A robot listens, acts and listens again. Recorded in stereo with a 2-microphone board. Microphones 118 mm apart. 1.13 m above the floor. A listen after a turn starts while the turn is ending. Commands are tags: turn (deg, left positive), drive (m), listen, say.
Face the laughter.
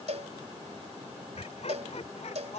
<turn deg="70"/>
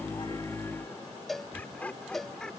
<say>Facing the laughter.</say>